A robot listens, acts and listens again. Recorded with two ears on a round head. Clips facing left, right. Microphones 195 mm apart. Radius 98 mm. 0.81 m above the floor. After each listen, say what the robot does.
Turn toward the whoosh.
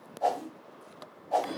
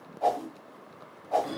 Turn 30° left.
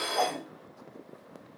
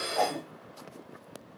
Turn 25° right.
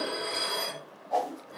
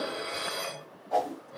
Facing the whoosh, 1 to 2 m away.